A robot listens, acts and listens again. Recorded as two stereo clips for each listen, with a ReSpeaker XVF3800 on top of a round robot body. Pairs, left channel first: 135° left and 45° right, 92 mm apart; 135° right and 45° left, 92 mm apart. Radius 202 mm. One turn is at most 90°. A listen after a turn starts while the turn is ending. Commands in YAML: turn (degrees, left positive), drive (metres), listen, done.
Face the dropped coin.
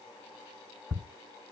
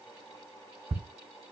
listen: true
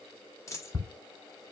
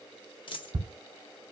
turn: -90
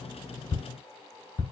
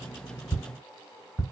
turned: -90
turn: -75
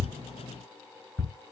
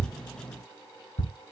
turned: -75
done: "I heard a dropped coin from this way, but can't make it out now."